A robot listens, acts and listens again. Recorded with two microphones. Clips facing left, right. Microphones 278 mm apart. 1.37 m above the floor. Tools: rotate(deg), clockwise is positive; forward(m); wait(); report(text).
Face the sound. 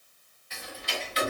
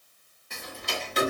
rotate(55)
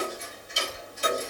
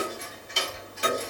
rotate(70)
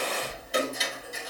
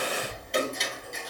report("Found it: ticking, straight ahead, under 1 m away.")